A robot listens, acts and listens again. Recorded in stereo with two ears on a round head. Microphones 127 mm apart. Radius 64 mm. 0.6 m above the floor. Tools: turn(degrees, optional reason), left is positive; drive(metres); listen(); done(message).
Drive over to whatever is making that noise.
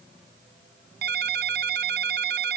turn(degrees=-90)
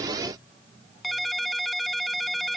drive(metres=1.0)
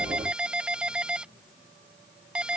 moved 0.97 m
turn(degrees=-10, reason="The ringtone is now 10° right.")
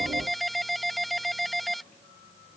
drive(metres=1.0)
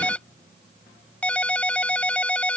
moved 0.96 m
turn(degrees=10, reason="The ringtone is now 10° left.")
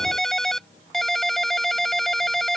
drive(metres=1.0)
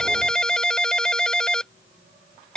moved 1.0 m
drive(metres=1.0)
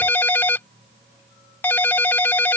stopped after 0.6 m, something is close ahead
turn(degrees=15, reason="The ringtone is now 15° left.")
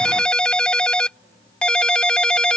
done("Arrived at the ringtone, straight ahead.")